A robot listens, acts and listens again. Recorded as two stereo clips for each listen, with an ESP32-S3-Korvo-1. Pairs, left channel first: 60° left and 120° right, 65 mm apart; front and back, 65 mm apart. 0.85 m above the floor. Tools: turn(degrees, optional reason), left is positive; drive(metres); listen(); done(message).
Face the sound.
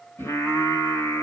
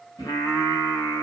turn(degrees=20, reason="The singing: 20° left.")
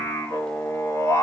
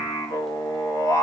turn(degrees=25, reason="The singing is now 25° left.")
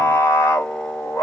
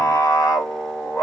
turn(degrees=25, reason="The singing is now 25° left.")
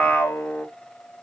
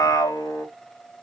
done("Found it: singing, straight ahead.")